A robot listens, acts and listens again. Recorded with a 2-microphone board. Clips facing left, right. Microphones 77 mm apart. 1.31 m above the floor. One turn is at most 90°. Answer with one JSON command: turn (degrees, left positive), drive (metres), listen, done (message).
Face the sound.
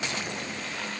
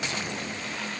{"listen": true}
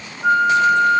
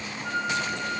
{"turn": 90}
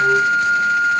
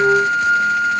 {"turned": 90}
{"done": "Found it: a flute, straight ahead."}